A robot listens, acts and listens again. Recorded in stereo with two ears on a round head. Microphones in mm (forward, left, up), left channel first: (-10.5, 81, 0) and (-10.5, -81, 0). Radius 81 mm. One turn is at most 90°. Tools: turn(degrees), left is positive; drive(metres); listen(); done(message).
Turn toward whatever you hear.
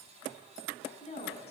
turn(degrees=40)
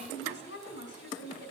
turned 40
turn(degrees=90)
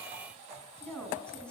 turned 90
done("Facing the woman speaking.")